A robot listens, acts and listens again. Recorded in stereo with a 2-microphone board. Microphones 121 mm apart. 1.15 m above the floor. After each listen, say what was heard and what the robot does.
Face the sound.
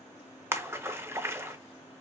The splash: about 20° right or 160° right. Turn 20° right.
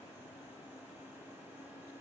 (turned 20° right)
Keep listening.
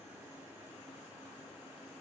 I heard a splash, but can't make it out now. It was about straight ahead or 140° right.